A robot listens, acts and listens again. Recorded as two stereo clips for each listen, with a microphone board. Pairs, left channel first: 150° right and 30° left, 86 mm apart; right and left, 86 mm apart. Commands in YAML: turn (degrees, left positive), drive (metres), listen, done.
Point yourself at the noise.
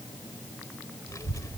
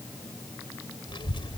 turn: -100
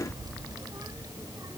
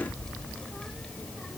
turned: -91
turn: -10
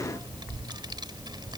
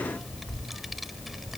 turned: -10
done: "Found it: a child speaking, straight ahead."